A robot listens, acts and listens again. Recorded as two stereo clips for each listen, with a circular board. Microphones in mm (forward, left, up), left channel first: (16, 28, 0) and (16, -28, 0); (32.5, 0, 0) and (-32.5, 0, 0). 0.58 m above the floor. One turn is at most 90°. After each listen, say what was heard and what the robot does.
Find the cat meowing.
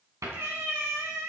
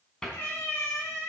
The cat meowing: 55° right. Turn 55° right.
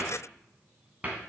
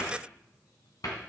Keep listening.
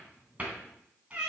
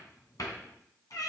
The cat meowing is now 20° right. Turn 20° right.
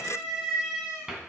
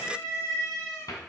The cat meowing is now 15° right. Turn 15° right.
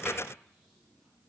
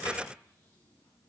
Keep listening.
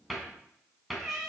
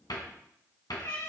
Facing the cat meowing, 2 to 4 m away.